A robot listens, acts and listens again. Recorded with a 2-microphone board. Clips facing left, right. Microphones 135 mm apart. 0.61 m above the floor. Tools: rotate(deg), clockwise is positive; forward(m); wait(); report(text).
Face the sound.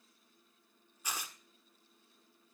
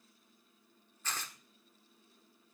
rotate(-30)
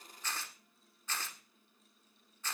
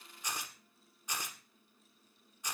rotate(15)
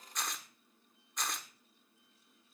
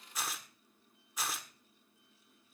report("Facing the tearing paper, 1 to 2 m away.")